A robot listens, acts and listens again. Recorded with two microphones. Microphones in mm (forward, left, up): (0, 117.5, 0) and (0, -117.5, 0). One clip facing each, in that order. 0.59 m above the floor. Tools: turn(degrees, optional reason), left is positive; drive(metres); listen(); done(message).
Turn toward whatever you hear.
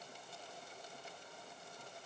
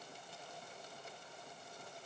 listen()
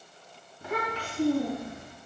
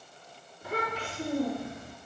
turn(degrees=90)
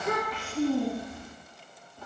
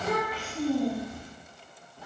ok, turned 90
turn(degrees=-10, reason="So it is at 10° right.")
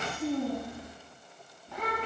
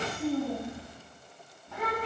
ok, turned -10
done("Found it: a child speaking, straight ahead.")